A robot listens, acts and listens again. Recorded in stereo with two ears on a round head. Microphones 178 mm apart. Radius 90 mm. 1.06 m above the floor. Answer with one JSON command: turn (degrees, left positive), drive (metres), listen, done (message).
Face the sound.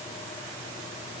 {"listen": true}
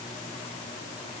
{"listen": true}
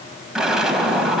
{"turn": -30}
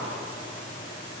{"listen": true}
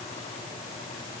{"done": "I heard an explosion, but can't make it out now. It was about 25° left or 145° right."}